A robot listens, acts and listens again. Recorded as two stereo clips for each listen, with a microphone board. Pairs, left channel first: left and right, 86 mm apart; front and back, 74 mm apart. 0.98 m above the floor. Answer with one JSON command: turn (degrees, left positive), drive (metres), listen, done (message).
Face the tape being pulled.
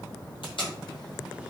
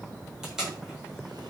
{"turn": 100}
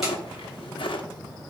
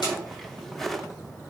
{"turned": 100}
{"listen": true}
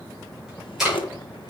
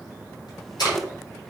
{"done": "Facing the tape being pulled, over 4 m away."}